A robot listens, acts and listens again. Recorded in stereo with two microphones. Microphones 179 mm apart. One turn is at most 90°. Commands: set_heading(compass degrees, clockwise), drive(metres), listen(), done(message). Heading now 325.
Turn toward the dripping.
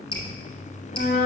set_heading(295)
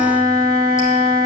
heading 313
listen()
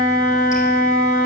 listen()
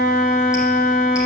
done("I heard dripping, but can't make it out now. It was about 15° left or 140° left.")